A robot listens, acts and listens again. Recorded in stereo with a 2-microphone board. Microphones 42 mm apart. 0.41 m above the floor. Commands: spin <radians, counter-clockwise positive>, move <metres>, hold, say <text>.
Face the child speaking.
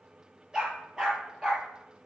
hold
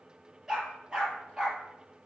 hold
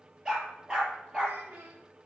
spin -1.05
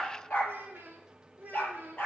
spin -0.79
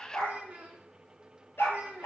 spin -0.44
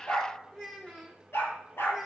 spin 0.26
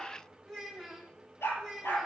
say Found it: a child speaking, straight ahead, 2 to 4 m away.